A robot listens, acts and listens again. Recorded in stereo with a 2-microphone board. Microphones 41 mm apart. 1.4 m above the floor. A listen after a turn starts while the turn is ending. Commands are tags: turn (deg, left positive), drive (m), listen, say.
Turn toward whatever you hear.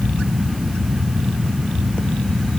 <listen/>
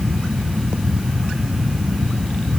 <listen/>
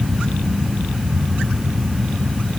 <say>I can't make out anything to turn to.</say>